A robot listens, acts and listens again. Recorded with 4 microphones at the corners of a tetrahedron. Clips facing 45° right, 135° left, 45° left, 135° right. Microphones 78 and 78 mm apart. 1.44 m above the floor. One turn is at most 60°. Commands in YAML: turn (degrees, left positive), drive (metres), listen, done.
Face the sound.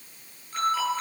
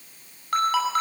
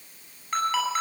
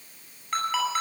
turn: 60
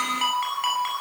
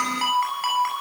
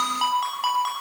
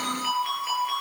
turn: 50
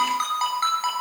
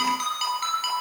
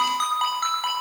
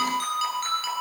done: "Found it: a ringtone, straight ahead."